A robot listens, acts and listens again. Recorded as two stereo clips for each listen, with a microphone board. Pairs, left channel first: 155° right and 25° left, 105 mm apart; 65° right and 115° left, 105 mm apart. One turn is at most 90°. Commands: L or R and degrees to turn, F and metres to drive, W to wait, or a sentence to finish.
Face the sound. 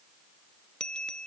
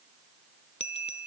R75
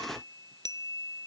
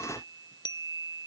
R25
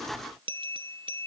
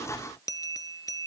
R15
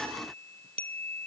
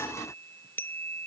Facing the bell.